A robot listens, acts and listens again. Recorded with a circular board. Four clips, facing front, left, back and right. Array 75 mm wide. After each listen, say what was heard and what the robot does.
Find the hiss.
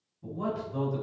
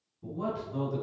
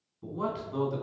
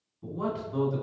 Keep listening.
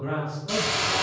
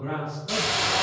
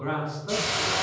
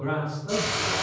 The hiss: 70° left. Turn 70° left.
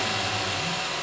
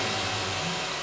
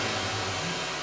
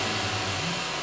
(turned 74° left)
Facing the hiss, 1 to 2 m away.